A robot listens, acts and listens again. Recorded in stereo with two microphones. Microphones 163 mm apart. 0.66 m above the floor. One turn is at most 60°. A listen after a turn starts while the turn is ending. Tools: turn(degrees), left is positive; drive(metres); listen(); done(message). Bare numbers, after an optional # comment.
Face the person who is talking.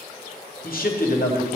# The man speaking: about 65° left or 115° left.
turn(60)
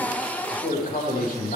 # So it is at 55° left.
turn(55)
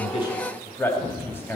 # The man speaking is now 15° left.
turn(15)
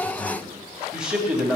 done("Facing the man speaking.")